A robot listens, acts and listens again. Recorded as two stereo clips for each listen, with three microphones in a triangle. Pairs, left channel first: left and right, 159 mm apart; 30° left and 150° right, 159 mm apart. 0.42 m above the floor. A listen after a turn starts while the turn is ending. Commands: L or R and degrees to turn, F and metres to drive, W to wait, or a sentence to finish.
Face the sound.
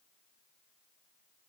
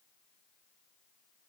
W
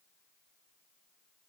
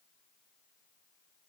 W
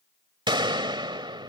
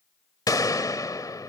R35
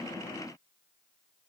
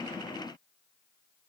I heard a gunshot from this way, but can't make it out now.